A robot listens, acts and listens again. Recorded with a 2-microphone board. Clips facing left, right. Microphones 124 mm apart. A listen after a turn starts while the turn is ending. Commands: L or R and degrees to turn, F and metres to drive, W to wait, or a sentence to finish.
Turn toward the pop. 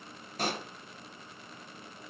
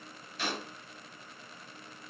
L45
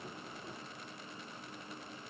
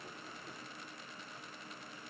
W
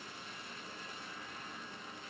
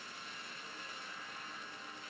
I heard a pop, but can't make it out now. It was about straight ahead or 90° left.